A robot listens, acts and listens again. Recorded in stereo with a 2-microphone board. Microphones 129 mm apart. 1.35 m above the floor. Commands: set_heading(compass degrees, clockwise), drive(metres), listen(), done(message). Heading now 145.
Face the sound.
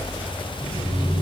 set_heading(75)
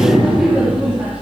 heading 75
set_heading(85)
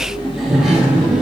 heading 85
done("Found it: laughter, straight ahead.")